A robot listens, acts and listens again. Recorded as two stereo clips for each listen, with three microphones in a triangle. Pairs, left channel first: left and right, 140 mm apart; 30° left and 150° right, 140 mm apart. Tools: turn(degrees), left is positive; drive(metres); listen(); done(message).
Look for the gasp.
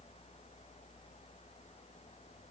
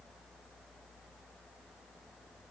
listen()
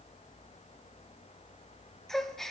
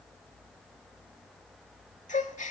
done("Found it: a gasp, straight ahead.")